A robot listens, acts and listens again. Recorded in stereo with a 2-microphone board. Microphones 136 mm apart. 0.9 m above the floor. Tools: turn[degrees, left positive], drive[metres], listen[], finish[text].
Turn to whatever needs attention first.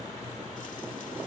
Action: listen[]
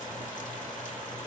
Action: listen[]
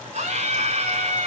Thought: The scream: about 55° right or 125° right.
Action: turn[-55]
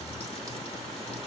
Action: listen[]
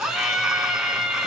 Action: finish[Facing the scream.]